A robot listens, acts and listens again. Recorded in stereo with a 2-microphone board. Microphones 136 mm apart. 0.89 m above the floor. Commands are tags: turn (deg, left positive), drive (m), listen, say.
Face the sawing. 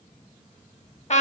<listen/>
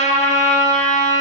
<listen/>
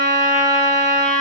<say>I can't make out sawing, only a trumpet.</say>